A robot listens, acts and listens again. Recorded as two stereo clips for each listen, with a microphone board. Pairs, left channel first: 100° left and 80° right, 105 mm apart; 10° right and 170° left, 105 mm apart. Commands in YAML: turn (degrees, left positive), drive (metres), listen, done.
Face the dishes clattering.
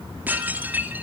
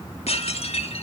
done: "Facing the dishes clattering, 2 to 4 m away."